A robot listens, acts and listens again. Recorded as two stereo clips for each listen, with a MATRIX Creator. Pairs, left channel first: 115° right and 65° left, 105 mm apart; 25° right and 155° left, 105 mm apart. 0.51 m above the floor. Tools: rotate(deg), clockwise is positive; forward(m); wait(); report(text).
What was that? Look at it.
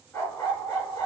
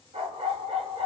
rotate(-175)
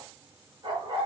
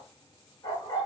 rotate(-25)
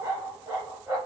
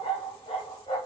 report("Found it: a dog barking, straight ahead.")